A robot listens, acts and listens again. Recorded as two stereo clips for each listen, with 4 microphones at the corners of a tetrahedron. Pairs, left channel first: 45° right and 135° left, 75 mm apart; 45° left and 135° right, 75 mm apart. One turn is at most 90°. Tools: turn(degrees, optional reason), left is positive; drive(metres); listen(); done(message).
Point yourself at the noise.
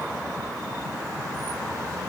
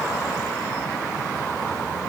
listen()
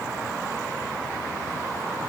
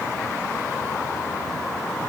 listen()
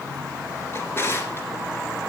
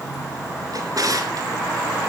turn(degrees=-90, reason="The drawer: 100° right.")
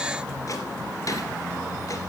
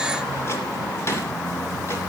turn(degrees=-10, reason="Nothing new. It was at 10° right.")
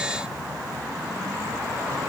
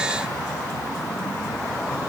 listen()
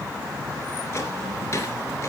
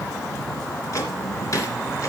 done("Found it: a drawer, straight ahead.")